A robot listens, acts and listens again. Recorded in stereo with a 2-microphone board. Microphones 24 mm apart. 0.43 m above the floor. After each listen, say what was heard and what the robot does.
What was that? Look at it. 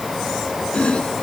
The chopping: about 65° left or 115° left. Turn 65° left.
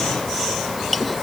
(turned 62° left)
Found it: chopping, straight ahead.